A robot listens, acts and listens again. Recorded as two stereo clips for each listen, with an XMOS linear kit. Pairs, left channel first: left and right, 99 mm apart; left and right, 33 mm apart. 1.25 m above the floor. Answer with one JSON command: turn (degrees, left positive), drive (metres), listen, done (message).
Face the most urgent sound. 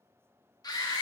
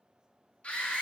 {"turn": 40}
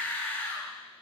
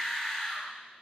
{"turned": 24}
{"turn": 15}
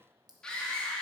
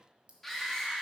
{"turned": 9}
{"turn": 10}
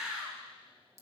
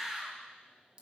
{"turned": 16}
{"done": "Found it: a scream, straight ahead, 1 to 2 m away."}